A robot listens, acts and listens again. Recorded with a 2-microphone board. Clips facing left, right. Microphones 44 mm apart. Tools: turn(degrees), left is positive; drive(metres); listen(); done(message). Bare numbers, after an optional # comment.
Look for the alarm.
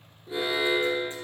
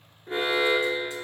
# The alarm: about 55° right or 125° right.
turn(-55)
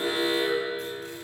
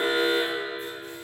# So it is at 60° right.
turn(-60)
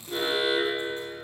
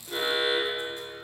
done("Facing the alarm, 2 to 4 m away.")